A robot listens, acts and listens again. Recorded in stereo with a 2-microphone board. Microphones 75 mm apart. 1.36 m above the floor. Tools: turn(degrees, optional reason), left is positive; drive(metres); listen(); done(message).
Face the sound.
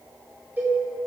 turn(degrees=-25, reason="The cowbell: about 25° right or 155° right.")
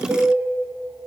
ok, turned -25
turn(degrees=-130, reason="So it is at 130° right.")
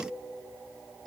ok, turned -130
done("Found it: a cowbell, straight ahead, 2 to 4 m away.")